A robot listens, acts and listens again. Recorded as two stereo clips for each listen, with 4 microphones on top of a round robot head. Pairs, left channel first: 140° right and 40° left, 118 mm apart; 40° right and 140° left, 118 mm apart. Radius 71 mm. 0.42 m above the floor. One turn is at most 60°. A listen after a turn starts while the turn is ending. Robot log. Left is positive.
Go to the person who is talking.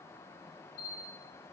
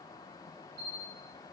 cmd idle
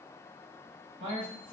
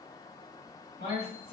cmd fwd 1.0
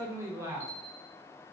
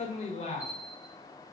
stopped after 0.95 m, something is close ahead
note: The man speaking is now 20° right.
cmd yaw -20
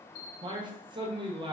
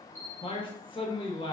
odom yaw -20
end: Arrived at the man speaking, straight ahead.